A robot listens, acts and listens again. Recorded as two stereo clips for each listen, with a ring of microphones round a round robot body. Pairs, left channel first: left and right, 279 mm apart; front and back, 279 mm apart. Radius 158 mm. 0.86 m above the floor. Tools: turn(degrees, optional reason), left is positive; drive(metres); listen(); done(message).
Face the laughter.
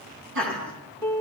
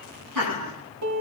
turn(degrees=-145, reason="The laughter: 145° right.")
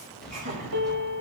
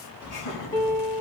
turn(degrees=-30, reason="The laughter is now 30° right.")
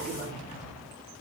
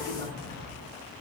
listen()
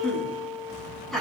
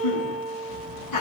done("Found it: laughter, straight ahead, over 4 m away.")